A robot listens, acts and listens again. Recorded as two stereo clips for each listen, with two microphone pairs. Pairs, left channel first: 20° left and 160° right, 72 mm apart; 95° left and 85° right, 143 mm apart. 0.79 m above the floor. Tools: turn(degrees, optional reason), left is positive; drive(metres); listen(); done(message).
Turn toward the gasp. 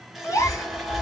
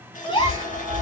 turn(degrees=50, reason="The gasp: 50° left.")
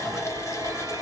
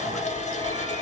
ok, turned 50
done("I heard a gasp from this way, but can't make it out now.")